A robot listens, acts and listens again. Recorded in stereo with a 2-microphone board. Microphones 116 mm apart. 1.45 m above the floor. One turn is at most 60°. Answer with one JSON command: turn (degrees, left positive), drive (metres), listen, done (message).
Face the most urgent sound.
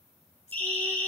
{"turn": 15}
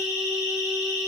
{"turn": 60}
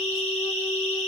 {"turn": 60}
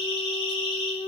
{"turn": 50}
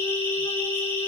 {"turn": 20}
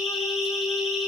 {"done": "Facing the siren."}